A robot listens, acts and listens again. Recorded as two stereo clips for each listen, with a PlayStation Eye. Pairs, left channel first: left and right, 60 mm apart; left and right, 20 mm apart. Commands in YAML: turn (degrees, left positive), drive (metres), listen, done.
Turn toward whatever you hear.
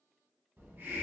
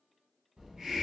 turn: -35
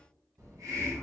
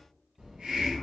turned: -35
turn: -105
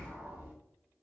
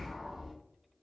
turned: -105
turn: -25
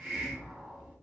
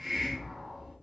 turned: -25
turn: -10
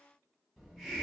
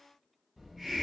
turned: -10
done: "Found it: a hiss, straight ahead."